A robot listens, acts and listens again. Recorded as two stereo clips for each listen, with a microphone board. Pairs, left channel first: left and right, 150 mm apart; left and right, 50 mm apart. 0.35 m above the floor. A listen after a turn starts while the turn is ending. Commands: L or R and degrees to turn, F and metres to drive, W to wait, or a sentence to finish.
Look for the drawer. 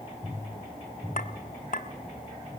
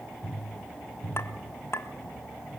W
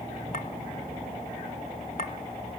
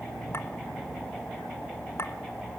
W
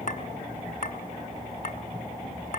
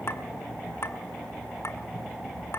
I can't make out a drawer to turn to.